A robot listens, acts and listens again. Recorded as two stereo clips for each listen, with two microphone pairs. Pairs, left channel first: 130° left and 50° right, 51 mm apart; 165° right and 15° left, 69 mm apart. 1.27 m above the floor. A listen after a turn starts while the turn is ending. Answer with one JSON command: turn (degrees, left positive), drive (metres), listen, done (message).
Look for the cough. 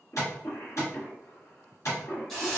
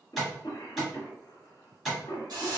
{"turn": 170}
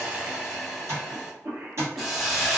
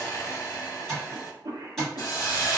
{"turn": -10}
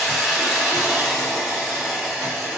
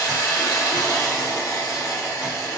{"listen": true}
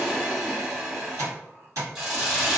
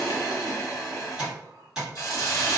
{"listen": true}
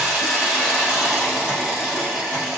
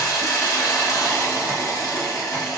{"done": "I heard a cough from this way, but can't make it out now."}